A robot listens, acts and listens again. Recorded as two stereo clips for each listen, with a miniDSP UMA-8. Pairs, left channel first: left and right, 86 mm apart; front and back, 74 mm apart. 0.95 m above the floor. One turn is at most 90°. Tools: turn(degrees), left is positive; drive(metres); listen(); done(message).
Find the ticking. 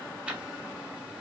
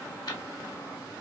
turn(degrees=-15)
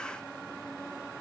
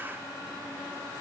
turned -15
listen()
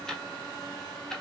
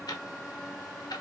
done("Facing the ticking, 1 to 2 m away.")